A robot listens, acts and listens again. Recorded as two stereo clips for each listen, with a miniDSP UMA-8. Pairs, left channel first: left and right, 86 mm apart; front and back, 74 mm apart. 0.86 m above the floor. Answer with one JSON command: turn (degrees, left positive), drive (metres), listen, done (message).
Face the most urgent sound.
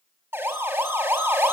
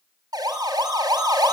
{"turn": -155}
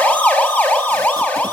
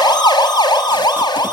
{"turn": 15}
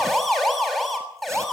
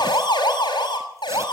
{"done": "Found it: a siren, straight ahead, over 4 m away."}